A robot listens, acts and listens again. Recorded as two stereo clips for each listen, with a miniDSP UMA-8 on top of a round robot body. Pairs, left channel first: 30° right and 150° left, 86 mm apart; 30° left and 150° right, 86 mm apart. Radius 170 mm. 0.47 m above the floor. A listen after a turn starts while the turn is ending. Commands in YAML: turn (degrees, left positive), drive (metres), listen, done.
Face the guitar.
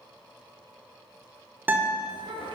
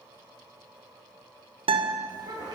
turn: -145
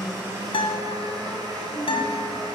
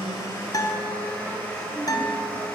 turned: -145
turn: -15
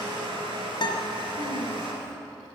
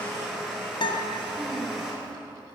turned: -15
done: "Found it: a guitar, straight ahead."